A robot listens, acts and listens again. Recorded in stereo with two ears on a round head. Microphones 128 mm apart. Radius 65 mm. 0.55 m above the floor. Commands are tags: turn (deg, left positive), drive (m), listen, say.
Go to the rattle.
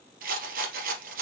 <turn deg="-70"/>
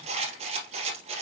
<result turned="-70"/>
<turn deg="-40"/>
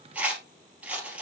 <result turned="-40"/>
<turn deg="-10"/>
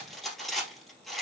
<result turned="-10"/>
<drive m="1.0"/>
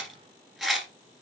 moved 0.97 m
<drive m="1.0"/>
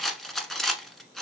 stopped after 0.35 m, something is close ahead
<say>Arrived at the rattle, straight ahead.</say>